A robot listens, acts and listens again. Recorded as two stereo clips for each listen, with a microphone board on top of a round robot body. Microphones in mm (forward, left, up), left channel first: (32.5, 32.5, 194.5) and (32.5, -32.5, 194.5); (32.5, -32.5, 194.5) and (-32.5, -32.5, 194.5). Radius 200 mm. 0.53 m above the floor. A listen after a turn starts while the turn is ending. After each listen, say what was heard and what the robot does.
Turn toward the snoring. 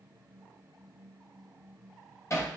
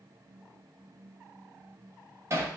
Keep listening.
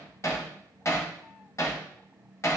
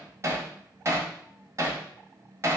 Keep listening.
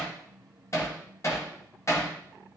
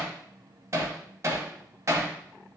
I can't make out snoring to turn to.